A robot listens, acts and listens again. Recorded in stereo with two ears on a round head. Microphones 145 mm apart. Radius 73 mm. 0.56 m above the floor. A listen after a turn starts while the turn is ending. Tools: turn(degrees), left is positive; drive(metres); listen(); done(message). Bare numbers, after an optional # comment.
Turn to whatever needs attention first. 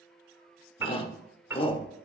# The shout: about 35° left or 145° left.
turn(35)
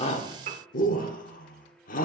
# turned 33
# So it is at 105° left.
turn(105)
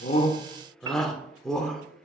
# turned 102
done("Facing the shout, 1 to 2 m away.")